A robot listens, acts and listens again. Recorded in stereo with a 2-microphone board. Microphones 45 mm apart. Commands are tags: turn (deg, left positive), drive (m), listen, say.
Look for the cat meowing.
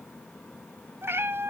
<turn deg="-65"/>
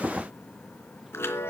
<listen/>
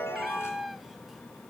<say>Found it: a cat meowing, straight ahead, 1 to 2 m away.</say>